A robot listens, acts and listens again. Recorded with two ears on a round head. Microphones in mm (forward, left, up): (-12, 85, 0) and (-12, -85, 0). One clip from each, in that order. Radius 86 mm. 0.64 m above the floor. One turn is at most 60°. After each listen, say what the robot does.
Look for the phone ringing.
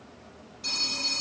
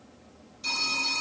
Turn 30° right.
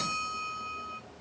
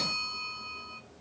Turn 25° left.
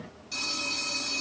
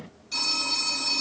Found it: a phone ringing, straight ahead, 2 to 4 m away.